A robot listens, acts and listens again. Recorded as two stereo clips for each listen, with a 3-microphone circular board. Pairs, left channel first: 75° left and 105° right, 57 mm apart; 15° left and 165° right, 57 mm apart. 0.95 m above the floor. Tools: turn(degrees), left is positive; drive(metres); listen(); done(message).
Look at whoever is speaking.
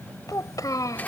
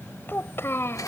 turn(degrees=60)
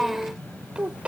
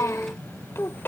turn(degrees=-35)
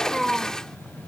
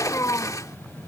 turn(degrees=-15)
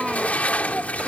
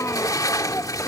turn(degrees=-25)
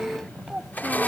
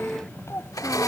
turn(degrees=-25)
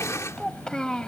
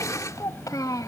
done("Facing the child speaking.")